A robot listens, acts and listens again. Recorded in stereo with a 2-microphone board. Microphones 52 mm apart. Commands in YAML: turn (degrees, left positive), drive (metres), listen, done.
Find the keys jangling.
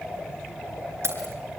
turn: -50
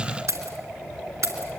turn: -85
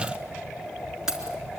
turn: -10
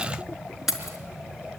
done: "Found it: keys jangling, straight ahead."